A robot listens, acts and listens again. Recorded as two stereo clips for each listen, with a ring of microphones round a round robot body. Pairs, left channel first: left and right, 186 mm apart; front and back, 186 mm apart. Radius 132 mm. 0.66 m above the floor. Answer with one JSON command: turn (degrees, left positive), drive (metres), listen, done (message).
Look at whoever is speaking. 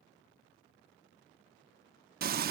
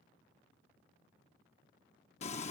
{"listen": true}
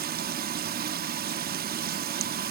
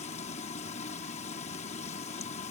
{"listen": true}
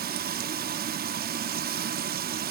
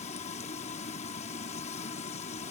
{"done": "I can't make out anyone speaking, only frying."}